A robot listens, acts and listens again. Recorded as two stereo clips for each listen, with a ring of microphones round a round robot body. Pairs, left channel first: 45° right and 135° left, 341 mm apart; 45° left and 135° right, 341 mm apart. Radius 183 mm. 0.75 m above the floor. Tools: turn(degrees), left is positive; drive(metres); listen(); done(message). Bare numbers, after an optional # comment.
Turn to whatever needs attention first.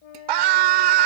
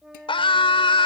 # The scream: 120° left.
turn(120)
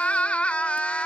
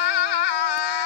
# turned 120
# The scream is now 40° left.
turn(40)
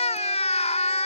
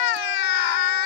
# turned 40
# The scream is now 30° left.
turn(30)
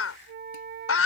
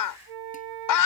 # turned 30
# The scream is now 10° left.
turn(10)
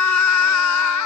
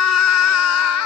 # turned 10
done("Found it: a scream, straight ahead.")